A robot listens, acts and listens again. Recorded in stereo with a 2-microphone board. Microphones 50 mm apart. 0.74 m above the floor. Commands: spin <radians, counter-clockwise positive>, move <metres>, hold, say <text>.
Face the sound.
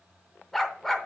spin 0.52
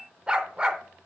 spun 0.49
spin -0.44
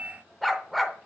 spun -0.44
say Found it: a dog barking, straight ahead.